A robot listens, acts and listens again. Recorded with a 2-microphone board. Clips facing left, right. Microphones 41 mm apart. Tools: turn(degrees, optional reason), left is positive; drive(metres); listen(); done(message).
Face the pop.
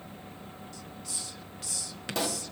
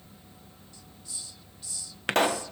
turn(degrees=-55, reason="The pop: about 55° right or 125° right.")
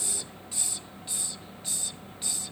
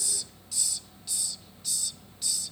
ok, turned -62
listen()
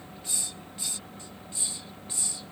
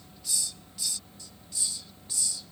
done("I heard a pop, but can't make it out now. It was about 10° left or 65° right.")